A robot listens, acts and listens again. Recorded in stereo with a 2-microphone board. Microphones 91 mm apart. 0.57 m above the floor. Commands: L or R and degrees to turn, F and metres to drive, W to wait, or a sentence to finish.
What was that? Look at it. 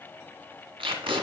R90
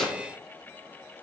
Found it: tape being pulled, straight ahead.